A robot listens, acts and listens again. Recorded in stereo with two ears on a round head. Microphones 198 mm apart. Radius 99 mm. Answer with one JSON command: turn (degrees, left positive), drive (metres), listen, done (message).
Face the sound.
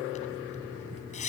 {"turn": 35}
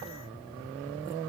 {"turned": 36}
{"listen": true}
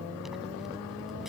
{"listen": true}
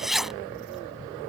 {"done": "Found it: a zipper, straight ahead."}